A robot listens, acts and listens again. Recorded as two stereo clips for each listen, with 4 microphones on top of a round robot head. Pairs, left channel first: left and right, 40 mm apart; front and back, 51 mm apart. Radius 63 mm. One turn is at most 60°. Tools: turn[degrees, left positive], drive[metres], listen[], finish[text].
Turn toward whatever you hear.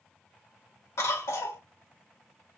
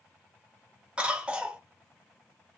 Thought: The cough: 110° left.
Action: turn[60]
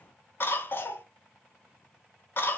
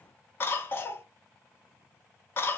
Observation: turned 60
Thought: The cough is now 50° left.
Action: turn[50]
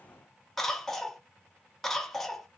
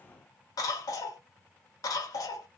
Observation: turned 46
Action: finish[Found it: a cough, straight ahead, under 1 m away.]